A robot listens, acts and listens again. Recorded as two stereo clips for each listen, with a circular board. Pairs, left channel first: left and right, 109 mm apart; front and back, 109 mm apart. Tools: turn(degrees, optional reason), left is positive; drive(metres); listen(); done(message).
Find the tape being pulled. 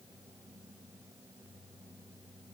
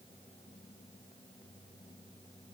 listen()
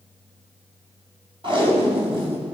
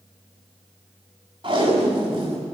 turn(degrees=-135, reason="The tape being pulled: 135° right.")
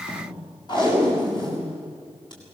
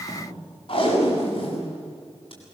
turn(degrees=40, reason="The tape being pulled is now 40° left.")
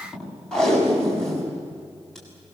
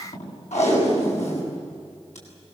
done("Found it: tape being pulled, straight ahead.")